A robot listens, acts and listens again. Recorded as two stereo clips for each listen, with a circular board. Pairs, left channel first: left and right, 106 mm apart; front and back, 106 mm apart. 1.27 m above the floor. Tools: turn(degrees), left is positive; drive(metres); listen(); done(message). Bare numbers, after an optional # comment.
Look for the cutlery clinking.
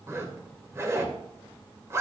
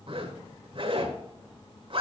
listen()
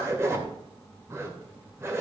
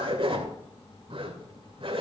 listen()
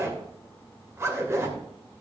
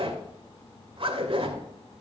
done("I can't make out cutlery clinking, only a zipper.")